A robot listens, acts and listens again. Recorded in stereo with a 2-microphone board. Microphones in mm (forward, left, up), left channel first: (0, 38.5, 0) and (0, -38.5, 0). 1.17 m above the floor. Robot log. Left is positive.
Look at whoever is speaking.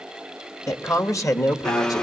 note: The man speaking: about 45° left or 135° left.
cmd yaw +45
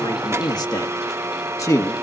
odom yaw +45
note: So it is at 40° left.
cmd yaw +40
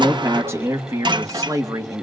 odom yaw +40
note: The man speaking is now 45° right.
cmd yaw -45
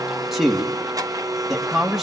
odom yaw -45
end: Facing the man speaking.